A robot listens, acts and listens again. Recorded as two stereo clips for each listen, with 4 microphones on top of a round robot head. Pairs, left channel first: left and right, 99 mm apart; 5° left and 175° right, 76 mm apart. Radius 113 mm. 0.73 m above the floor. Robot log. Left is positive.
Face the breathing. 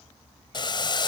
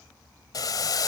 cmd idle
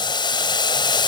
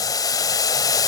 cmd idle
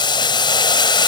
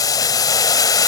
end: I can't make out breathing to turn to.